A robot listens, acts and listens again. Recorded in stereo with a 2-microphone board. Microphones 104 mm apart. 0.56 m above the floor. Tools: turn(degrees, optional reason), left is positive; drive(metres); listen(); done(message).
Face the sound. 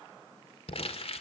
turn(degrees=60, reason="The crumpling: about 60° left or 120° left.")
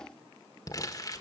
turn(degrees=40, reason="So it is at 40° left.")
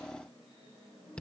turn(degrees=10, reason="The crumpling is now 10° left.")
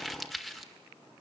done("Facing the crumpling.")